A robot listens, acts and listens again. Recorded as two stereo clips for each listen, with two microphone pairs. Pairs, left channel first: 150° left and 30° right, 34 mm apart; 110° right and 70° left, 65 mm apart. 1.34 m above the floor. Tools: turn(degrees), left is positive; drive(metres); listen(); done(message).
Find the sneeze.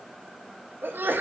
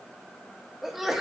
turn(degrees=-20)
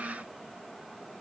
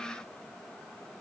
done("I heard a sneeze from this way, but can't make it out now.")